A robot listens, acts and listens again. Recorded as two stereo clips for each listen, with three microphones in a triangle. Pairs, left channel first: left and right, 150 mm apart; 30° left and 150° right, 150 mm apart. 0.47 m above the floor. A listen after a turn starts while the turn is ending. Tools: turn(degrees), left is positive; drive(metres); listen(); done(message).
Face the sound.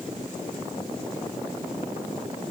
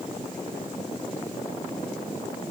listen()
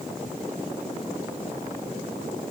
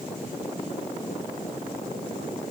listen()
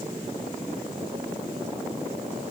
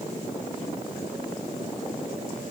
done("I can't make out anything.")